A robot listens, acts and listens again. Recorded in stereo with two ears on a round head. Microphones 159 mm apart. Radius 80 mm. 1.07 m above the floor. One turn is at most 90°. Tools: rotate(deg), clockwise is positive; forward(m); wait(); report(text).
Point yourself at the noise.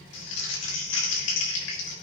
rotate(-90)
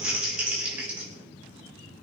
report("Found it: crumpling, straight ahead.")